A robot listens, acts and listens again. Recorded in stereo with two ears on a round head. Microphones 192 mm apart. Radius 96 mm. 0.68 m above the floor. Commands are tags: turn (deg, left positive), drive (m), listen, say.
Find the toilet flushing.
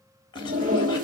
<turn deg="-35"/>
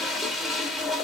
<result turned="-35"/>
<say>Facing the toilet flushing.</say>